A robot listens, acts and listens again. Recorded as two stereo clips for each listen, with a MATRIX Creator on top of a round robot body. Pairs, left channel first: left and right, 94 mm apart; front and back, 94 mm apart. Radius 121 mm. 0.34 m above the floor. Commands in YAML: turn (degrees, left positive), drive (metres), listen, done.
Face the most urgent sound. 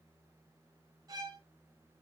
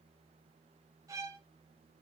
listen: true
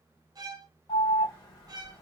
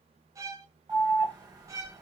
turn: 135
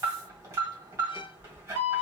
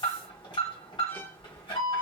turn: -30
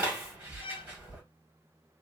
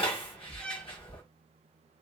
turn: -20
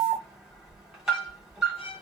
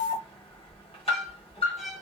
done: "Found it: an alarm, straight ahead, 1 to 2 m away."